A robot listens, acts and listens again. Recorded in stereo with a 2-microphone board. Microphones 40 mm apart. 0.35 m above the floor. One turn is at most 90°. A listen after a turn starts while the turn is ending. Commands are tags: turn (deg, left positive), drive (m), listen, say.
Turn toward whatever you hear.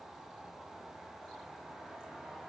<listen/>
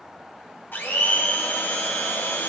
<turn deg="65"/>
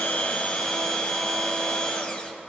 <turn deg="25"/>
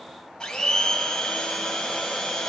<turn deg="20"/>
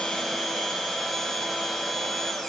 <say>Facing the blender, 1 to 2 m away.</say>